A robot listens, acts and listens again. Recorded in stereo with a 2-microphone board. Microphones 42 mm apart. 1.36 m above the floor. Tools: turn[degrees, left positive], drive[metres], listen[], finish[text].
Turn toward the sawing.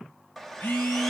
Action: turn[30]
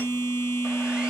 Action: listen[]
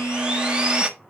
Thought: So it is at 20° right.
Action: turn[-20]
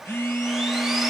Action: listen[]
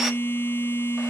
Action: listen[]
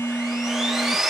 Action: finish[Facing the sawing, 1 to 2 m away.]